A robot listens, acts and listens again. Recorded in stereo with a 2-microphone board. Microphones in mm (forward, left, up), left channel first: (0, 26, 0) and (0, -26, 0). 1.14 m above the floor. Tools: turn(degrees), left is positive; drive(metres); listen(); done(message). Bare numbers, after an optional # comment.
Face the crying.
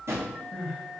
turn(30)
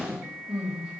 # So it is at 15° right.
turn(-15)
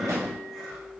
done("Facing the crying.")